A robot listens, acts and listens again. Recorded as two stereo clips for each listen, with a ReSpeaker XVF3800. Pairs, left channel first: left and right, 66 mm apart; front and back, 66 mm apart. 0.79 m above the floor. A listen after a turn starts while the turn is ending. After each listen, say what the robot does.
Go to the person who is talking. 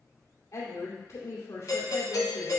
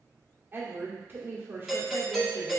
Turn 125° left.
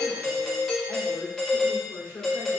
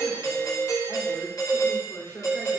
Turn 45° left.
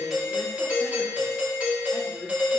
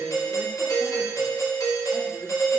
Keep listening.
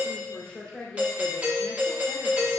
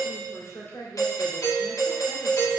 Turn 15° left.
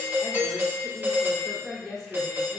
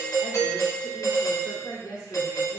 Drive 1.0 m forward.
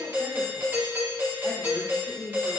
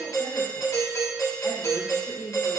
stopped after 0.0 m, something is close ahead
Something is in my way. I am facing the woman speaking but have not reached it.